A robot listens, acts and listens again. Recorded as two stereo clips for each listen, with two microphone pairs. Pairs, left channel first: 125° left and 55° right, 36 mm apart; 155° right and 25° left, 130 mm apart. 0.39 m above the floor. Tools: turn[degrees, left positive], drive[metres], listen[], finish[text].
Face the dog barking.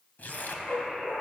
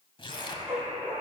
Thought: The dog barking: 105° left.
Action: turn[105]
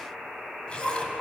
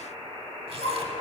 Thought: The dog barking is now 35° left.
Action: turn[35]
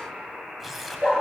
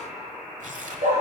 Action: finish[Facing the dog barking.]